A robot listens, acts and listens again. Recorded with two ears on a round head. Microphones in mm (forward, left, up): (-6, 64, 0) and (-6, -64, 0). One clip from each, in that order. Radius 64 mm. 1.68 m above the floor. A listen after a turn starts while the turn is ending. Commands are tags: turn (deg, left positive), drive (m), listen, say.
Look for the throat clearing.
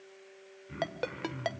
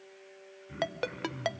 <turn deg="30"/>
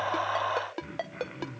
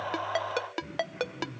<turn deg="140"/>
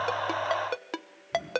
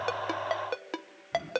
<turn deg="-10"/>
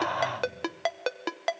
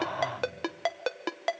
<say>Found it: throat clearing, straight ahead, over 4 m away.</say>